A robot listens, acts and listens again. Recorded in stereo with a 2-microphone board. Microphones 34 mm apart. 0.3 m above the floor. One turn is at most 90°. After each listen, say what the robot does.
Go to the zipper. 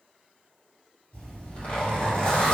Turn 35° left.
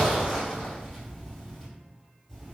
Drive 1.0 m forward.
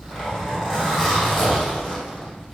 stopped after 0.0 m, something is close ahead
Something is in my way. I am facing the zipper but have not reached it.